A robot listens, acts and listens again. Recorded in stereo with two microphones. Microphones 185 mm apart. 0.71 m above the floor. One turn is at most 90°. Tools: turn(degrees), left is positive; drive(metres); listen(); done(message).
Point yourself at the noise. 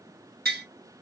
turn(degrees=-60)
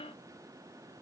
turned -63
listen()
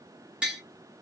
done("Found it: tapping, straight ahead, 1 to 2 m away.")